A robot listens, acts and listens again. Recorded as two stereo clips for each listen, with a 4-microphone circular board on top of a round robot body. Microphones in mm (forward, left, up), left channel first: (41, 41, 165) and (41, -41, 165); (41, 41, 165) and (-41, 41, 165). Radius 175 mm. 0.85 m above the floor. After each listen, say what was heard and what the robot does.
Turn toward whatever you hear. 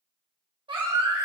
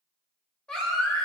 The baby crying: 80° right. Turn 80° right.
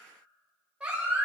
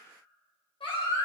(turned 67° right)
The baby crying is now 10° right. Turn 10° right.
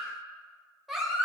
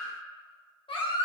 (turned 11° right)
Found it: a baby crying, straight ahead.